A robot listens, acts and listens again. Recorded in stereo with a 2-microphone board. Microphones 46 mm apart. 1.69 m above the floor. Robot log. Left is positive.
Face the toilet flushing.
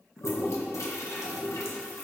cmd yaw +90
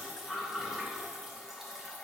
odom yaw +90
note: So it is at 10° right.
cmd yaw -10
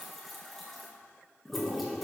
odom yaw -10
end: Found it: a toilet flushing, straight ahead.